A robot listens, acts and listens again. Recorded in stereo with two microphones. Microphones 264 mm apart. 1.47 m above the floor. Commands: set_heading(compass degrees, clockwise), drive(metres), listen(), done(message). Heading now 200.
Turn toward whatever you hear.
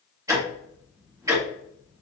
set_heading(230)
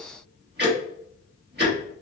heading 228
set_heading(8)
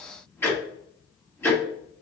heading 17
set_heading(7)
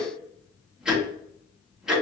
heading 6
done("Found it: ticking, straight ahead, 1 to 2 m away.")